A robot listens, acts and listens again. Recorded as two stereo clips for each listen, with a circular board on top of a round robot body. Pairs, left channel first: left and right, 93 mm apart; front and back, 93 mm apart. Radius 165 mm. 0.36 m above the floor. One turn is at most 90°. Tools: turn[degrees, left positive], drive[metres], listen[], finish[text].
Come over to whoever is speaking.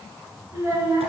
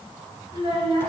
Thought: The child speaking: 150° right.
Action: turn[-90]
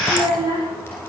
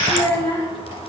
Thought: The child speaking is now 55° right.
Action: turn[-55]
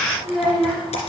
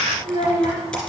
Action: drive[1.0]
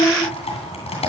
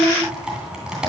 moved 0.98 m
Action: drive[1.0]
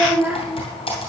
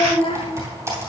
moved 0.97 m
Thought: The child speaking is now 10° right.
Action: turn[-10]
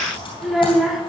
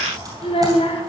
Action: drive[1.0]
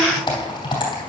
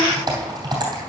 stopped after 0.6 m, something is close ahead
Action: listen[]
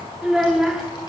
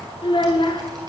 Action: finish[I am next to the child speaking.]